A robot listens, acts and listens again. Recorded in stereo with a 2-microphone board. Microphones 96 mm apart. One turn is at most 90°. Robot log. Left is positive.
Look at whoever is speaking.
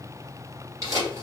cmd idle
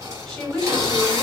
cmd yaw +30
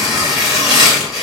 cmd idle
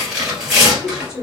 note: So it is at 145° left.
cmd yaw +90
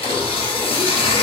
note: Nothing new. It was at 55° left.
cmd yaw +55
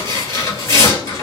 cmd idle
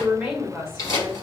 end: Facing the woman speaking, 1 to 2 m away.